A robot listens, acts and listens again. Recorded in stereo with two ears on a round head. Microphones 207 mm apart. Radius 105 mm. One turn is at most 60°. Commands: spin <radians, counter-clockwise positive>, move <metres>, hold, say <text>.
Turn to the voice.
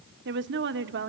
spin -0.87
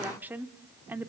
spin -0.17
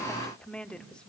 say Facing the woman speaking, 1 to 2 m away.